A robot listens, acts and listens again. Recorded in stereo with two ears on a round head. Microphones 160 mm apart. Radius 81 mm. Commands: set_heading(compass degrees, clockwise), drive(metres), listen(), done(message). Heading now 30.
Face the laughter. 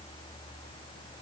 listen()
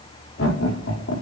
set_heading(300)
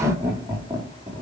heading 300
set_heading(310)
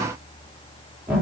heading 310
done("Facing the laughter, over 4 m away.")